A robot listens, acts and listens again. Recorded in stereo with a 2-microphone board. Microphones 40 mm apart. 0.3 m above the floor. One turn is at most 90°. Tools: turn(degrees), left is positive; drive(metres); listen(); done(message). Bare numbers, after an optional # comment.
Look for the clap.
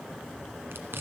listen()
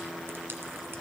listen()
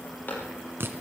# The clap: about 45° left or 135° left.
turn(45)
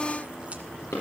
# So it is at 90° left.
turn(90)
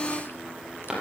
# The clap is now 15° right.
turn(-15)
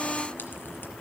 listen()
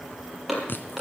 done("Found it: a clap, straight ahead.")